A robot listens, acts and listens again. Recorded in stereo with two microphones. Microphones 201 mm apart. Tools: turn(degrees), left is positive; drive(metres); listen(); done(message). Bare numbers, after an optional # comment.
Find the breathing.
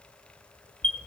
listen()
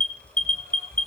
listen()
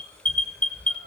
done("I can't make out breathing to turn to.")